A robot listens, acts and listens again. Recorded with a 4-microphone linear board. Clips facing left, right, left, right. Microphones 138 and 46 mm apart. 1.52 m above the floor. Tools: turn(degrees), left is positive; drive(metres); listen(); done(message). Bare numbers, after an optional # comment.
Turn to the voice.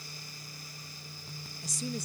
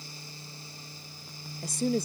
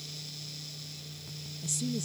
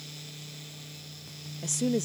# The woman speaking: about 60° right or 120° right.
turn(-60)
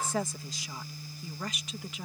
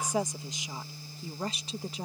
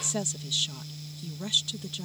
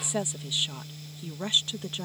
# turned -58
# So it is at 35° right.
turn(-35)
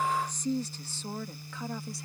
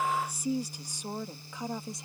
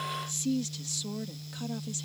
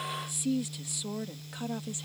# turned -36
# The woman speaking is now 20° right.
turn(-20)
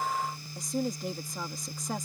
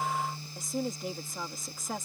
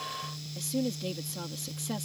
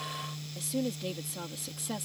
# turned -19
done("Facing the woman speaking.")